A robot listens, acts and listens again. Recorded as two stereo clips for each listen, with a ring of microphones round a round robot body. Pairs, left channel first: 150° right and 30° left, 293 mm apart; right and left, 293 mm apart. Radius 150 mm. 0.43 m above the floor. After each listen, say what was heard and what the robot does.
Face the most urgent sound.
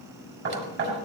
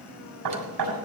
Keep listening.
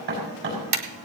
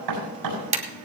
Keep listening.
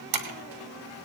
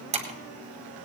I can't make out anything urgent to turn to.